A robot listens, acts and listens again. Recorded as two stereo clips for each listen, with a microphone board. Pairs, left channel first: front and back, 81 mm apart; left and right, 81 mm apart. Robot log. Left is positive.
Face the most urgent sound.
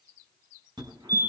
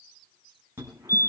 note: The fire alarm: 155° right.
cmd yaw -155
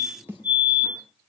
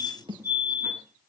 note: The fire alarm is now 30° right.
cmd yaw -30
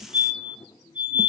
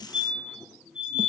note: The fire alarm is now 15° right.
cmd yaw -15
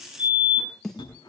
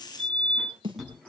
end: Found it: a fire alarm, straight ahead.